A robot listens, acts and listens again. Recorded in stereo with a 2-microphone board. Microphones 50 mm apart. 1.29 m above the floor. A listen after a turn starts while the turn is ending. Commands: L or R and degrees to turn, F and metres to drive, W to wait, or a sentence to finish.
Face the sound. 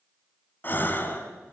L40
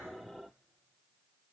W
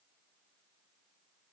I heard a gasp, but can't make it out now. It was about straight ahead or 100° left.